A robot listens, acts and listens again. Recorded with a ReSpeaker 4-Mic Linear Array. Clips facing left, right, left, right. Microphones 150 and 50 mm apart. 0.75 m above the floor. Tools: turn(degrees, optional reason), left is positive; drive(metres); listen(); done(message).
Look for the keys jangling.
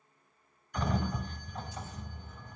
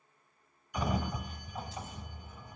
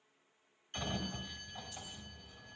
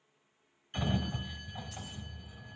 listen()
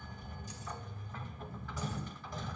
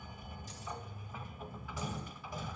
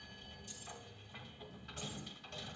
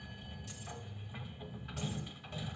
listen()
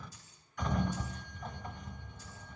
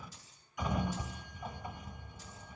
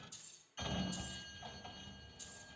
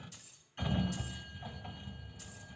turn(degrees=-90)
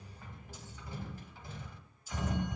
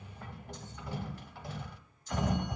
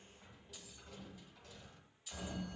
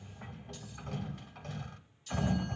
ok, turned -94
done("Facing the keys jangling, 2 to 4 m away.")